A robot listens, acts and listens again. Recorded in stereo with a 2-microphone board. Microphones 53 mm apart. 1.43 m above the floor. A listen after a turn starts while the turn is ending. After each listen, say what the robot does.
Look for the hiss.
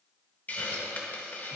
Turn 35° left.
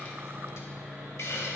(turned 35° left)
Turn 110° left.
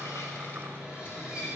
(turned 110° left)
Keep listening.
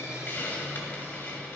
Turn 40° left.
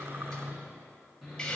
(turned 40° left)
Turn 15° left.
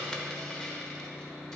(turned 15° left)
Turn 10° left.
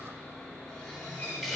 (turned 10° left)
Facing the hiss.